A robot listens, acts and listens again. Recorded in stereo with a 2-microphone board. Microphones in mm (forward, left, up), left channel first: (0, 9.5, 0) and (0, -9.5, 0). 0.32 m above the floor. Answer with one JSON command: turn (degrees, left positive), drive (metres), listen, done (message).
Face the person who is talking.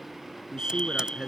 {"turn": -45}
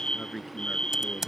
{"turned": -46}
{"done": "Found it: a man speaking, straight ahead."}